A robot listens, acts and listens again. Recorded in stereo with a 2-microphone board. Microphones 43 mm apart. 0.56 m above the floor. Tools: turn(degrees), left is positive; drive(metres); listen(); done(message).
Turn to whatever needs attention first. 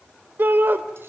turn(degrees=-55)
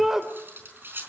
turn(degrees=-10)
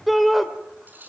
done("Facing the shout, 2 to 4 m away.")